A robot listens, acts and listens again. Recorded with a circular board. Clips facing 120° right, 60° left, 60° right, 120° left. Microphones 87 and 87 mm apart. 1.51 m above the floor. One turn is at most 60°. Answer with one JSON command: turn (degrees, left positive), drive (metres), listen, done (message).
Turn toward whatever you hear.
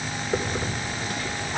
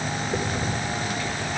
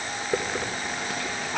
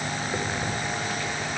{"turn": -60}
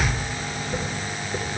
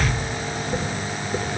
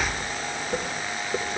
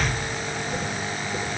{"turn": -10}
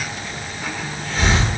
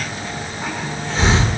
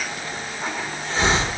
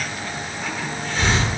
{"done": "Facing the hiss."}